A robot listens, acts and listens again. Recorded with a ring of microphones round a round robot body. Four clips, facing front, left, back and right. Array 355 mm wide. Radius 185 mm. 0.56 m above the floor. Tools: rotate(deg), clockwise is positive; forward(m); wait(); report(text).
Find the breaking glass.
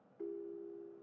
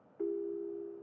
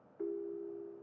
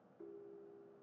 wait()
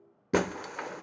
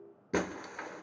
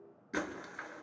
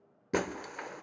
report("Found it: breaking glass, straight ahead, 1 to 2 m away.")